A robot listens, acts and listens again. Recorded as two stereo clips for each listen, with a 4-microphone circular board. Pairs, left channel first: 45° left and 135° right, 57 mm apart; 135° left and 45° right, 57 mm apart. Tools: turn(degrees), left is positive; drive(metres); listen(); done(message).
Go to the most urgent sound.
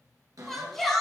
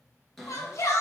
turn(degrees=130)
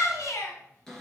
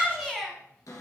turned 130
turn(degrees=35)
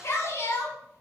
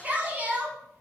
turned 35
turn(degrees=15)
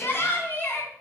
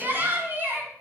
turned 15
drive(metres=1.0)
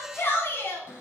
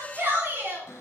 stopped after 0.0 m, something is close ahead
done("Blocked. The shout is further on, straight ahead.")